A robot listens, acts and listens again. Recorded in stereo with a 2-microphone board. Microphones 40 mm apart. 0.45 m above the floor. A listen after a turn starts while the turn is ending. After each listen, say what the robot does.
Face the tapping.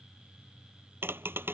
Turn 65° right.
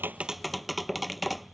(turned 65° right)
Facing the tapping.